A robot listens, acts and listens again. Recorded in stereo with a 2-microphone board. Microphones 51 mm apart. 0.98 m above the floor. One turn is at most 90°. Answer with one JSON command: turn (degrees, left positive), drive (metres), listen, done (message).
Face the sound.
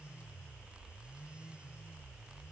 {"listen": true}
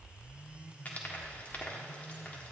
{"turn": 30}
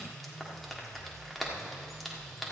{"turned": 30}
{"done": "Facing the frying."}